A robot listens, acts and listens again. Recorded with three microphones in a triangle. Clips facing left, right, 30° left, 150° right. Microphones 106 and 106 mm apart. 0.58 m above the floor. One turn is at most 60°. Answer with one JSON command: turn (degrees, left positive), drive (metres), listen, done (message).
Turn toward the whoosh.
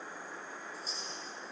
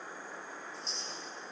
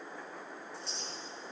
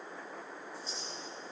{"listen": true}
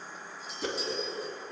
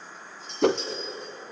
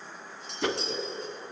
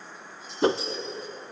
{"turn": -60}
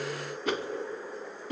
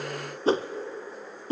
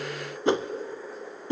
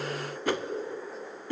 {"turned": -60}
{"turn": -35}
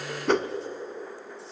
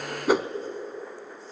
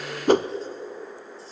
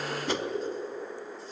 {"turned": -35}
{"turn": -10}
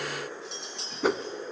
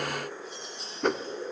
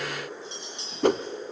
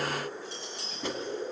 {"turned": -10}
{"done": "Facing the whoosh."}